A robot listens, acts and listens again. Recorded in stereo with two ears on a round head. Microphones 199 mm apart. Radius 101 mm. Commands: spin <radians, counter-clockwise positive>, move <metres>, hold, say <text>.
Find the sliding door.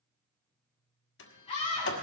spin 0.96
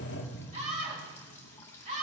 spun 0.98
spin 1.05
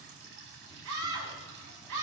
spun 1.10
hold
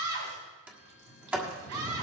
say Found it: a sliding door, straight ahead, 1 to 2 m away.